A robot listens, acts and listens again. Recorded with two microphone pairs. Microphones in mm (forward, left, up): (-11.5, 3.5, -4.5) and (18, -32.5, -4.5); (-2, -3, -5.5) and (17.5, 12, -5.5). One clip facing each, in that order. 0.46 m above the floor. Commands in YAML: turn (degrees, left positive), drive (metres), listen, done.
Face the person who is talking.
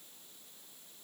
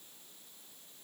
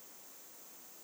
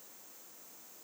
listen: true
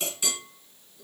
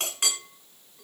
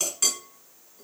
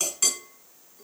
listen: true
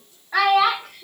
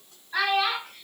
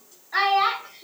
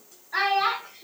turn: 150
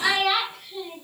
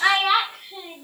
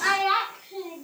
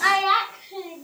done: "Facing the child speaking."